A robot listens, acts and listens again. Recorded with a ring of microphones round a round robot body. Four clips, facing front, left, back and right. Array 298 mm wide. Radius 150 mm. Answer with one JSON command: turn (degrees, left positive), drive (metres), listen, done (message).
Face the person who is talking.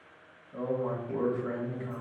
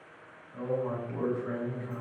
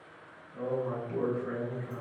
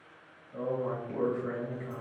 {"turn": -30}
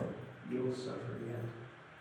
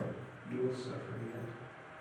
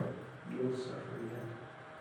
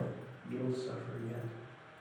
{"turn": -20}
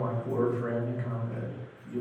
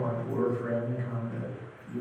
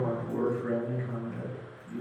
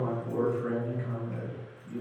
{"done": "Found it: a man speaking, straight ahead."}